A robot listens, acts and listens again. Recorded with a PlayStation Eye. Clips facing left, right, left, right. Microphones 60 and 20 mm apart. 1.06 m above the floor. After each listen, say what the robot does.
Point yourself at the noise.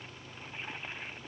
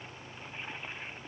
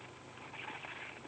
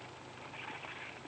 Keep listening.
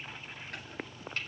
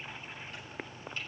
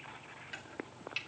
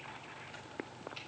Turn 75° left.
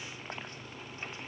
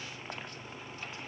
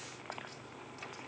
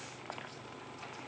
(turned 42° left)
Keep listening.
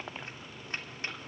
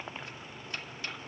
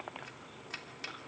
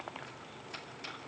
Turn 35° left.
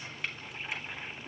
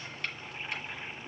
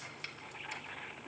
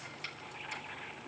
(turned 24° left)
Turn 10° left.
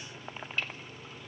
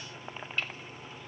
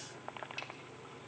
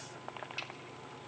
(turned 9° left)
Facing the chopping.